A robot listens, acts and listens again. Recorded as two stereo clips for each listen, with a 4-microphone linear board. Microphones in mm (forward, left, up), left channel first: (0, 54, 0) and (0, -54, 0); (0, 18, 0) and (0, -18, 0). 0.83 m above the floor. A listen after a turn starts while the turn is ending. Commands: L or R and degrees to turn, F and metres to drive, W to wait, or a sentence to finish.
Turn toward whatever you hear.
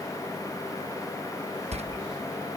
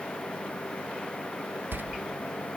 R75
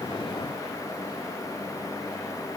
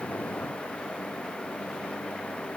W
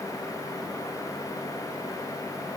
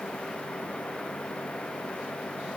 I heard a door slam, but can't make it out now. It was about straight ahead or 30° right.